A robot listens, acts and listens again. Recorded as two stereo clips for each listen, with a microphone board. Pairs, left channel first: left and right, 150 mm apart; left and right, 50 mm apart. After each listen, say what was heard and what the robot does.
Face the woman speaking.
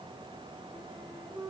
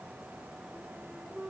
Keep listening.
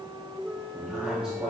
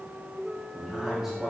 Turn 30° right.
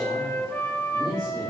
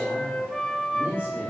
So it is at 150° right. Turn 150° right.
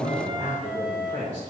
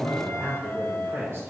The woman speaking is now 65° right. Turn 65° right.
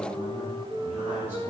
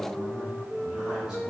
The woman speaking is now 15° right. Turn 15° right.
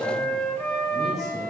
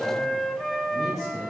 Keep listening.
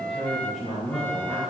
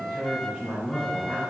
Facing the woman speaking, over 4 m away.